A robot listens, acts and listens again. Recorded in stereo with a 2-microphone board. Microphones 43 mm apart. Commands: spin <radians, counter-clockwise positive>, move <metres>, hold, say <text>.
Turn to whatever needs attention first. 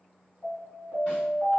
spin 0.70
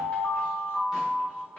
spin 1.57
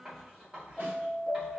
spin 0.17
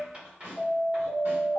say Found it: an alarm, straight ahead.